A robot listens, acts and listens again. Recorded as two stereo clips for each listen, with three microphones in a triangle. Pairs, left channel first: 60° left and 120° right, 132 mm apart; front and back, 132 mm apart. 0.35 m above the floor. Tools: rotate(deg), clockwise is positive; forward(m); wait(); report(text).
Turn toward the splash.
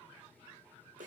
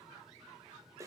wait()
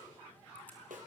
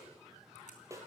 wait()
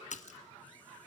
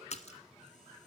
rotate(-35)
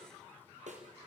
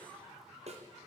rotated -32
report("I heard a splash from this way, but can't make it out now.")